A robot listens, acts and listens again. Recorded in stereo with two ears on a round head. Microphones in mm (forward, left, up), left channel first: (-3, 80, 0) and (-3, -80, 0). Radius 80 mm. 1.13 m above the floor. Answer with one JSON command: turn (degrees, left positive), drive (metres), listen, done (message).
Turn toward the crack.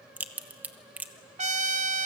{"turn": -30}
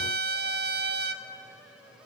{"listen": true}
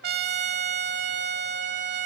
{"done": "I heard a crack, but can't make it out now. It was about 20° left or 140° right."}